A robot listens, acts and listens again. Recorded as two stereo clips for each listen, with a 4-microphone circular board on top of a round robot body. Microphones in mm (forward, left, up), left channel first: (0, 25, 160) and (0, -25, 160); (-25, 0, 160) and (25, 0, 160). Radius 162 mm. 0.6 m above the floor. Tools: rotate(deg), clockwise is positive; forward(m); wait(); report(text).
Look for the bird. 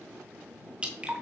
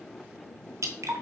wait()
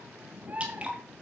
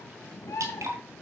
rotate(150)
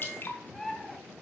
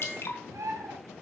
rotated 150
rotate(-10)
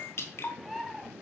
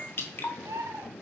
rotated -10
report("Found it: a bird, straight ahead.")